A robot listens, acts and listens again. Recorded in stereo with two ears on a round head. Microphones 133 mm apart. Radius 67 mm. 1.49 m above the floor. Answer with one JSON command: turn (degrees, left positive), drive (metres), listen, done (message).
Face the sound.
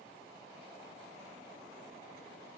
{"listen": true}
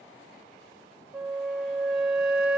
{"turn": -30}
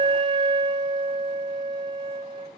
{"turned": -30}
{"turn": -145}
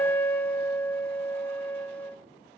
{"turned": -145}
{"turn": 10}
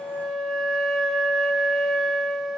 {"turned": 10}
{"done": "Facing the flute."}